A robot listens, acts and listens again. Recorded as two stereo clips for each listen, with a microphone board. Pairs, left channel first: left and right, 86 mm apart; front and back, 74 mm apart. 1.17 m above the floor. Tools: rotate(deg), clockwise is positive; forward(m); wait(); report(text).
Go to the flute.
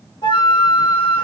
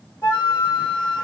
rotate(-55)
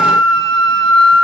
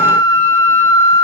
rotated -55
forward(1.0)
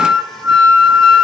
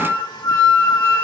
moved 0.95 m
forward(1.0)
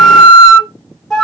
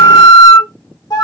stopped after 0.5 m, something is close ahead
report("I am next to the flute.")